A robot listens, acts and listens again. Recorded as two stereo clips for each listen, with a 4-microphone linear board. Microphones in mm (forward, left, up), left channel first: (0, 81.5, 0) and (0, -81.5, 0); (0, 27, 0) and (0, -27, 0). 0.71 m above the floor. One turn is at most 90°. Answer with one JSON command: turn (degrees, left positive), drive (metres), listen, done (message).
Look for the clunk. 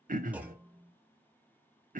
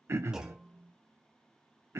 {"turn": -30}
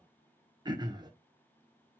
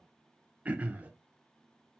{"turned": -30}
{"listen": true}
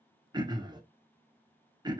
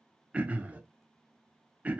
{"done": "I heard a clunk, but can't make it out now. It was about 20° left or 140° right."}